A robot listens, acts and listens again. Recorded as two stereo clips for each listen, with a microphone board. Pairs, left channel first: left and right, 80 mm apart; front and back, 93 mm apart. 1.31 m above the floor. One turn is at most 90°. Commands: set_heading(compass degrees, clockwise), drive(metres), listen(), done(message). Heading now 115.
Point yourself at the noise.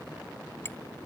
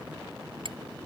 set_heading(25)
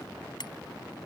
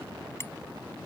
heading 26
set_heading(326)
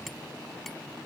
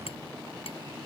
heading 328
listen()
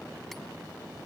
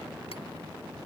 listen()
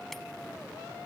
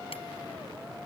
done("Facing where the hammering came from. I can't hear it now.")